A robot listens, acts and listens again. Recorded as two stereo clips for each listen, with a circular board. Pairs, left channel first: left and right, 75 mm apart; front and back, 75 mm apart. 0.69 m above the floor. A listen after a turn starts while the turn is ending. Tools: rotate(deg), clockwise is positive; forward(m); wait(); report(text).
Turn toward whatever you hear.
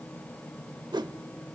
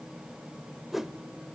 rotate(90)
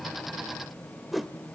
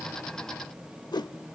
report("Facing the whoosh, under 1 m away.")